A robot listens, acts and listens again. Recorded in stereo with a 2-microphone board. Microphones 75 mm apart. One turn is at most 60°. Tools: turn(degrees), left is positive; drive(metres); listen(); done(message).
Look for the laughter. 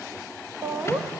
turn(degrees=-45)
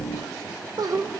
turn(degrees=-60)
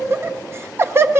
turn(degrees=-40)
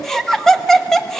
done("Facing the laughter.")